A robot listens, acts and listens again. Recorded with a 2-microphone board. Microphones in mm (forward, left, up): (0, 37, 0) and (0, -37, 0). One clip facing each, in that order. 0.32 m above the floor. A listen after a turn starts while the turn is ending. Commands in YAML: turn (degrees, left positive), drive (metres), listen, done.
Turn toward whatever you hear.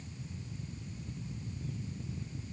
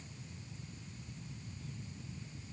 listen: true
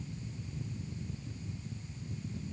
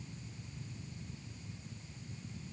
listen: true
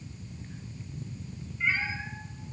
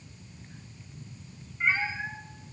turn: -50
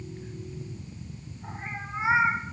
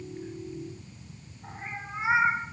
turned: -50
done: "Found it: a cat meowing, straight ahead, over 4 m away."